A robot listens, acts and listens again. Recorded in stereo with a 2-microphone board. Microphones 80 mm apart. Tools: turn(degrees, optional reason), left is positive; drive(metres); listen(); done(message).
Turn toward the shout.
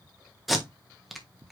listen()
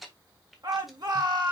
turn(degrees=-60, reason="The shout: about 60° right or 120° right.")
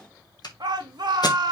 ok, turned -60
turn(degrees=-60, reason="So it is at 60° right.")
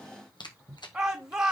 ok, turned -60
done("Facing the shout, 2 to 4 m away.")